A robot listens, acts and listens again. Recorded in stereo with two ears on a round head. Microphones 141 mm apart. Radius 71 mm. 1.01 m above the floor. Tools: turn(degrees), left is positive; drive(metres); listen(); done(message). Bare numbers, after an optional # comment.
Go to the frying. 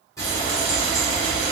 # The frying: about 20° left or 160° left.
turn(20)
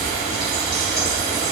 drive(1.0)
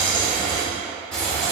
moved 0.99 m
drive(1.0)
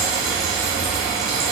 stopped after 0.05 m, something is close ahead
done("Arrived at the frying, straight ahead.")